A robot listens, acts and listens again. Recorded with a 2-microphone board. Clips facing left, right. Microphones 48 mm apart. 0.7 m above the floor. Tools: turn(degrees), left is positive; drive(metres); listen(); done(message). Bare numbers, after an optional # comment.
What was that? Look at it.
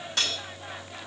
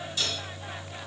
turn(90)
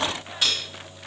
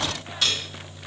# So it is at 15° left.
turn(15)
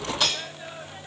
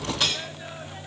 done("Found it: cutlery clinking, straight ahead.")